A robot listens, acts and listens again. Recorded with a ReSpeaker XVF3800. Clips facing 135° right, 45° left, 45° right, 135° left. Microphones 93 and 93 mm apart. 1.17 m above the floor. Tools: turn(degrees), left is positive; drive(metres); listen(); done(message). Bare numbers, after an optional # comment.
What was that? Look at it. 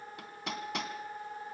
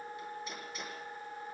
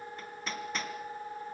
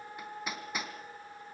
# The hammering: 145° right.
turn(-145)
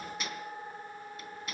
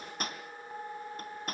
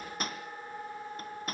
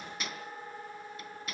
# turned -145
done("Found it: hammering, straight ahead, 2 to 4 m away.")